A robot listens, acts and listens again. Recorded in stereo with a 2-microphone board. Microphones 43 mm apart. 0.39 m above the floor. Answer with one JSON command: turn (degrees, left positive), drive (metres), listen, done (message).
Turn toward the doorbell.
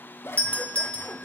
{"turn": 25}
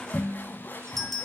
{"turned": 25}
{"done": "Found it: a doorbell, straight ahead, 2 to 4 m away."}